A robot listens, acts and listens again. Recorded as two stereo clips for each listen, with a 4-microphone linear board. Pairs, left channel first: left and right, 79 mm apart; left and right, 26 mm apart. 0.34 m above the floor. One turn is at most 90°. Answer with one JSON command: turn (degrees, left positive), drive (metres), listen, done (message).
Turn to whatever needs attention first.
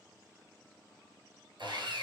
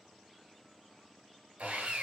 {"listen": true}
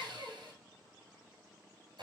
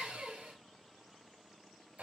{"listen": true}
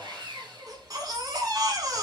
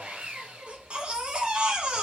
{"turn": -55}
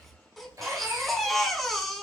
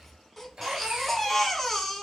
{"done": "Found it: a baby crying, straight ahead, under 1 m away."}